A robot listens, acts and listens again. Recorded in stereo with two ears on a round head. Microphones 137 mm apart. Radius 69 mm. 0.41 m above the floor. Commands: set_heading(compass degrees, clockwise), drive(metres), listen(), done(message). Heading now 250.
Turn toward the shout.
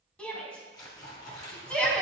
set_heading(220)
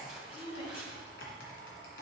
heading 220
set_heading(80)
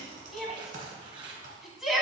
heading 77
done("Found it: a shout, straight ahead.")